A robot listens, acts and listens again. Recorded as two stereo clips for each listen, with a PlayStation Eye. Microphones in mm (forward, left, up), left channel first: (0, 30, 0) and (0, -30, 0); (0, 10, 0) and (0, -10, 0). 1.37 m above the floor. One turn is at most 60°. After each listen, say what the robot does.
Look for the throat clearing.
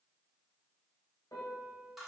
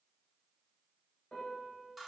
Keep listening.
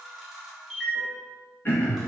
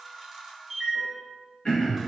Turn 35° left.
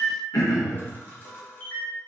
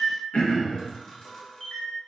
Turn 60° left.
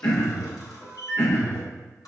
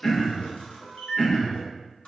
Turn 45° left.
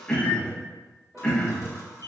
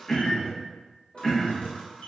Turn 15° left.
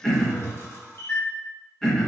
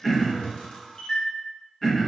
Found it: throat clearing, straight ahead.